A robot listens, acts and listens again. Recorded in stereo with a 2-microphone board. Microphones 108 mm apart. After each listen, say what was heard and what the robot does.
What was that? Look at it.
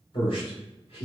The man speaking: about 55° left or 125° left. Turn 55° left.
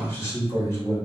So it is at 30° left. Turn 30° left.
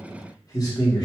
The man speaking is now 40° left. Turn 40° left.
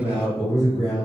The man speaking is now 35° left. Turn 35° left.
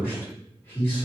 The man speaking is now 25° left. Turn 25° left.
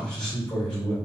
The man speaking is now 10° left. Turn 10° left.
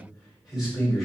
Facing the man speaking.